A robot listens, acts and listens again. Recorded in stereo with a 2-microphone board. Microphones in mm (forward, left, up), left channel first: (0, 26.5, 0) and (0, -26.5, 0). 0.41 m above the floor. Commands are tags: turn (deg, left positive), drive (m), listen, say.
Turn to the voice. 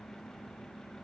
<listen/>
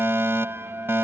<listen/>
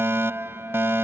<say>I can't make out anyone speaking to turn to.</say>